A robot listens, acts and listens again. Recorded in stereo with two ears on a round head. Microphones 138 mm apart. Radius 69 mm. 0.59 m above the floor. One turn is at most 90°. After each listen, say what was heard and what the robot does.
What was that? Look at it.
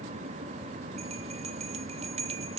The bell: about 45° right or 135° right. Turn 45° right.
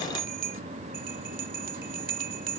So it is at 80° right. Turn 80° right.
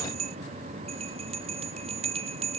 The bell is now 45° right. Turn 45° right.
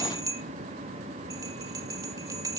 The bell is now 25° right. Turn 25° right.
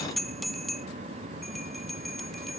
Facing the bell, under 1 m away.